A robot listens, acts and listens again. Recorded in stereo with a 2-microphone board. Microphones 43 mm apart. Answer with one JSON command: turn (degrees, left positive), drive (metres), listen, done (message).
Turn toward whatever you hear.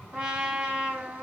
{"turn": -25}
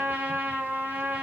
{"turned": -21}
{"turn": -130}
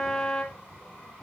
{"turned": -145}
{"turn": 15}
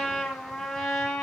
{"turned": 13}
{"done": "Facing the trumpet, 2 to 4 m away."}